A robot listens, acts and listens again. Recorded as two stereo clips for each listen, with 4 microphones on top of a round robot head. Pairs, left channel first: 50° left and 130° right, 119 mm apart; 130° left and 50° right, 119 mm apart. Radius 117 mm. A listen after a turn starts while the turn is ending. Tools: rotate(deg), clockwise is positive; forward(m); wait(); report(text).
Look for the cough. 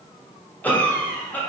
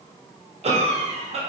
rotate(25)
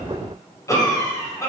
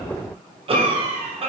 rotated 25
rotate(15)
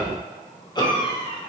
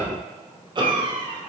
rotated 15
report("Found it: a cough, straight ahead.")